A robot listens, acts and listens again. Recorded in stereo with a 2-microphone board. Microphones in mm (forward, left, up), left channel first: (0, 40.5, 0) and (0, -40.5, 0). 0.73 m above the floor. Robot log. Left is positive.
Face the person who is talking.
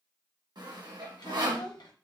note: The child speaking: about 65° left or 115° left.
cmd yaw +65
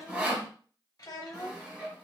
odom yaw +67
note: So it is at 50° left.
cmd yaw +50
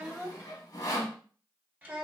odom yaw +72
note: The child speaking is now 20° right.
cmd yaw -20
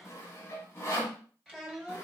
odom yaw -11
note: The child speaking is now 10° right.
cmd yaw -10
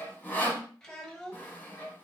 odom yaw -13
end: Found it: a child speaking, straight ahead, under 1 m away.